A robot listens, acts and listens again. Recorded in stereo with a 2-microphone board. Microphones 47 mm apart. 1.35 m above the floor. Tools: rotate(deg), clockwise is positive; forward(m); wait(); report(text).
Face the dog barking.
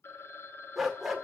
rotate(-30)
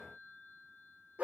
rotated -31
rotate(30)
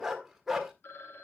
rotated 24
report("Found it: a dog barking, straight ahead.")